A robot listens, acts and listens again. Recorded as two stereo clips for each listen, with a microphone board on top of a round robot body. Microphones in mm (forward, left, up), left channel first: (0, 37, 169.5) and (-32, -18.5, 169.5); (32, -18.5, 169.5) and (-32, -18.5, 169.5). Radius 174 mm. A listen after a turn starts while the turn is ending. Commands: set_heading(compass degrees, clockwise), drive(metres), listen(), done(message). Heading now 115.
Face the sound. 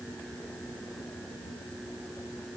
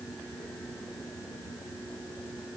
listen()
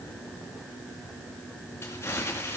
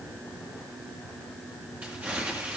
set_heading(5)
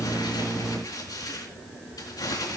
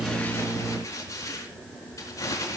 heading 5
set_heading(325)
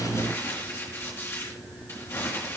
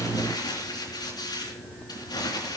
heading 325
done("Found it: crumpling, straight ahead.")